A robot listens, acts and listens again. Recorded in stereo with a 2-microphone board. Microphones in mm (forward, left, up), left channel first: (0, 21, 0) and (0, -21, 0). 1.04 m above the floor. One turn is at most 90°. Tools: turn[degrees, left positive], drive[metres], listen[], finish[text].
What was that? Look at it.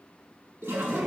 Action: turn[-90]
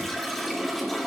Action: finish[Facing the toilet flushing, 2 to 4 m away.]